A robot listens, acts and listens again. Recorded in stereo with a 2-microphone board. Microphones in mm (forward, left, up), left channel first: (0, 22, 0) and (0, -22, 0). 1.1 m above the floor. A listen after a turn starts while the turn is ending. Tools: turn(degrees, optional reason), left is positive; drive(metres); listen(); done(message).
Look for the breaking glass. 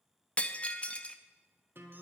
turn(degrees=25, reason="The breaking glass: about 25° left or 155° left.")
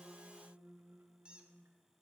listen()
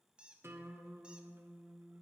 done("I heard breaking glass, but can't make it out now. It was about straight ahead or 130° left.")